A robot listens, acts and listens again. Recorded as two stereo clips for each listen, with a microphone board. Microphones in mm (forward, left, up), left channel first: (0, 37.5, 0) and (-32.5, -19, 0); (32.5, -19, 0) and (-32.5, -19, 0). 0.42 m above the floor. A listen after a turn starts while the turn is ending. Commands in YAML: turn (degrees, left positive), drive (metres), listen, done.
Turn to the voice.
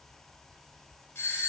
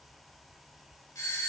listen: true
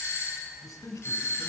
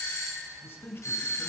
turn: 45
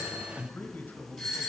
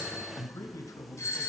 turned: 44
done: "Facing the man speaking, 1 to 2 m away."